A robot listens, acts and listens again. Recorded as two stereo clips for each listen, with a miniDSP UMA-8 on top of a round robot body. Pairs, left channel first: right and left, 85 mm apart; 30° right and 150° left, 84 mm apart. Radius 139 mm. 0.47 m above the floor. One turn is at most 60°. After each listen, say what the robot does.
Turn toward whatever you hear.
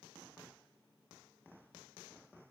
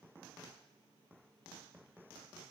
Keep listening.
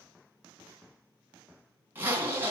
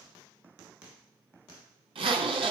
Turn 60° left.
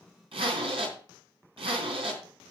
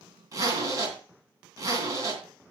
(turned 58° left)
Turn 60° left.
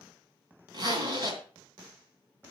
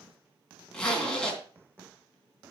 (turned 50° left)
Turn 50° left.
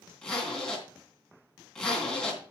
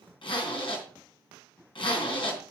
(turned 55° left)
Facing the zipper, 2 to 4 m away.